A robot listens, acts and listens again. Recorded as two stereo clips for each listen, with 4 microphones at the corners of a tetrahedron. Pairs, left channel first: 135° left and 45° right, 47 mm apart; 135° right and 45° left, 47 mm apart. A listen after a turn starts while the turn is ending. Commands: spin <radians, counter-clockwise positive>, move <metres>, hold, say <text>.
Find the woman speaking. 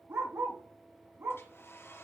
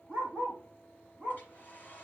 hold
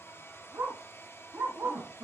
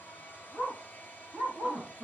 spin -0.52
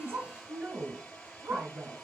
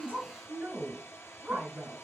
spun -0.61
say Found it: a woman speaking, straight ahead.